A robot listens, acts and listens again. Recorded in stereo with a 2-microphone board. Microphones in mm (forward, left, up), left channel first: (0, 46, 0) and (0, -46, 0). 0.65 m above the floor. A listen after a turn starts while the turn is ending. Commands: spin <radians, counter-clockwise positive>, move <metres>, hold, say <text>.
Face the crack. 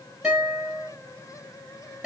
hold
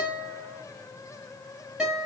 hold
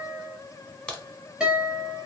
spin 0.52
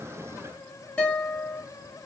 hold
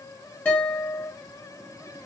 say I heard a crack, but can't make it out now. It was about 20° right or 140° left.